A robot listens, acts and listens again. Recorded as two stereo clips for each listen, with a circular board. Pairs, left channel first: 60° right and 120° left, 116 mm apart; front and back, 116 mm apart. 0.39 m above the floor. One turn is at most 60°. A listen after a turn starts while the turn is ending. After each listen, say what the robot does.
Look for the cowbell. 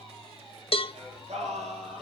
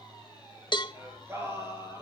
Turn 40° right.
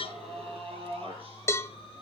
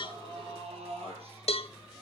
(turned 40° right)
Found it: a cowbell, straight ahead, 1 to 2 m away.